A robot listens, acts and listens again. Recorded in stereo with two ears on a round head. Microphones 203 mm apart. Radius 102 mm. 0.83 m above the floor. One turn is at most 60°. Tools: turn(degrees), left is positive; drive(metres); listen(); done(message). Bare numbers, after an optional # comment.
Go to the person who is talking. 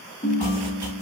listen()
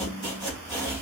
listen()
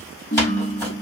done("I can't make out anyone speaking to turn to.")